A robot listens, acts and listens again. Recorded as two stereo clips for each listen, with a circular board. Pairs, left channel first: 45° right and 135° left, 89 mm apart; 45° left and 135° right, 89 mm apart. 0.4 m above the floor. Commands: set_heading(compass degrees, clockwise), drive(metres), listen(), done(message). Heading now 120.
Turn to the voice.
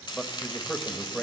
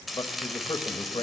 set_heading(75)
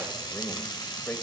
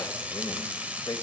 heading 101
set_heading(76)
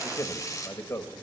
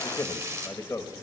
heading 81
done("Found it: a man speaking, straight ahead, 1 to 2 m away.")